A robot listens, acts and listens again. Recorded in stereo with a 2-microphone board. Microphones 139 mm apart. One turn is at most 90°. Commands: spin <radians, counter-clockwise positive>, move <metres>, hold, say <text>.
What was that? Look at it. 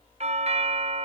spin -0.87
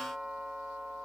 say Found it: a doorbell, straight ahead.